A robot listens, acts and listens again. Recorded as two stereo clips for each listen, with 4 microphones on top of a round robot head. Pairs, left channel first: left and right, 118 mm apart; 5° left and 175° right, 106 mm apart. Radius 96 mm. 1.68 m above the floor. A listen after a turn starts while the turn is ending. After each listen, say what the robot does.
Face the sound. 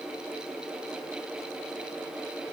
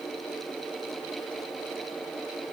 Keep listening.
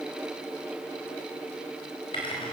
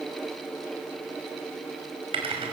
Turn 150° left.
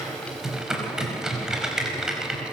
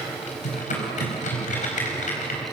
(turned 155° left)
Found it: typing on a keyboard, straight ahead.